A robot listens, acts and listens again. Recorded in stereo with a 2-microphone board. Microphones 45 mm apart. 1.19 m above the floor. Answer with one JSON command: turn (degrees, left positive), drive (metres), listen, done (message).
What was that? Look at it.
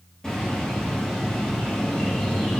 {"turn": 30}
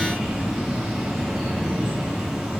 {"turn": -10}
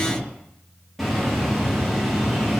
{"done": "Facing the bird, 1 to 2 m away."}